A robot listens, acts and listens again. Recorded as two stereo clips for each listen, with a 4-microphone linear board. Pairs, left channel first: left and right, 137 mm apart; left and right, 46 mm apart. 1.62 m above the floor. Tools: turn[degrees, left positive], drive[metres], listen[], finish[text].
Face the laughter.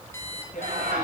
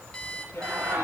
Action: turn[-90]
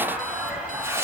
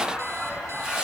Thought: So it is at 10° right.
Action: turn[-10]
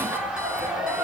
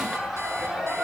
Action: finish[Facing the laughter.]